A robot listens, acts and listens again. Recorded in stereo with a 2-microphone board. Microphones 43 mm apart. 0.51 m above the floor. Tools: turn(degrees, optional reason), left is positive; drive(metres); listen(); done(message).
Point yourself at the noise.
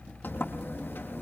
turn(degrees=50, reason="The sliding door: about 50° left or 130° left.")
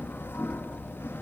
turn(degrees=80, reason="So it is at 80° left.")
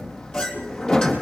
turn(degrees=20, reason="The sliding door is now 20° left.")
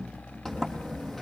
turn(degrees=10, reason="The sliding door is now 10° left.")
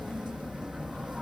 done("Found it: a sliding door, straight ahead.")